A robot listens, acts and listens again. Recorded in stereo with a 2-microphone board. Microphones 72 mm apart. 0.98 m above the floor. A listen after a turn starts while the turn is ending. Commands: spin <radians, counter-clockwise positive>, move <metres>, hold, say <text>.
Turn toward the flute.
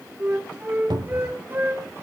spin -0.52
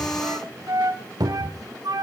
spin -2.18
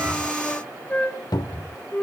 spin 0.35
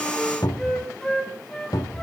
spin 0.17
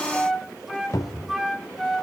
say Found it: a flute, straight ahead.